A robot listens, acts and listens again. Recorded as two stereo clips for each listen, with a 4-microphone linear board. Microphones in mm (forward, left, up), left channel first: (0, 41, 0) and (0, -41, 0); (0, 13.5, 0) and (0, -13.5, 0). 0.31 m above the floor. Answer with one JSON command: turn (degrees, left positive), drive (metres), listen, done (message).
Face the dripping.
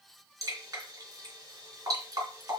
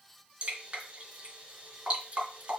{"turn": -40}
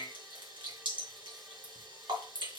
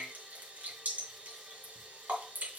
{"turn": -95}
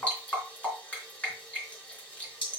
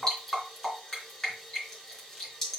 {"turn": 15}
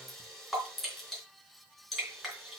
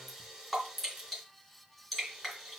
{"done": "Found it: dripping, straight ahead, 2 to 4 m away."}